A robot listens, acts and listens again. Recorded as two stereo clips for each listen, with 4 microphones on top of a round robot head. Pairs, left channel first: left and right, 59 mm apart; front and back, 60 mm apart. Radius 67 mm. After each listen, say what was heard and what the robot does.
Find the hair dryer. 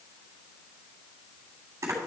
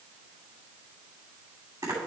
Keep listening.
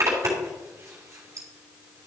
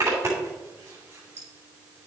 Keep listening.
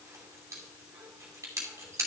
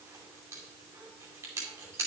I can't make out a hair dryer, only a zipper.